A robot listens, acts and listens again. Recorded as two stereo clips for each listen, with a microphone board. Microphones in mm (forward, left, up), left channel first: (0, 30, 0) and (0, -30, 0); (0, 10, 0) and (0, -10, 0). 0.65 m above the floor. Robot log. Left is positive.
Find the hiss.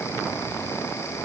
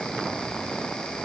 cmd idle
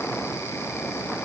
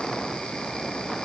cmd idle
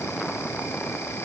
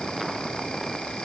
end: I can't make out a hiss to turn to.